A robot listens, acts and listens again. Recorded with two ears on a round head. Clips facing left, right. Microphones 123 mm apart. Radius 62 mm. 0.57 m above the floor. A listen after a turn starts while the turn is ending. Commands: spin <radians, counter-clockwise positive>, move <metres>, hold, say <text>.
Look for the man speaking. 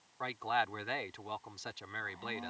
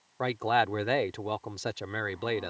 spin -0.96
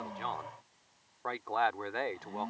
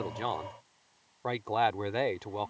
spin -0.52
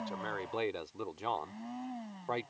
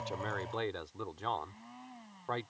spin 0.26
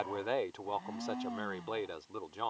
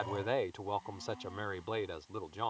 say Found it: a man speaking, straight ahead.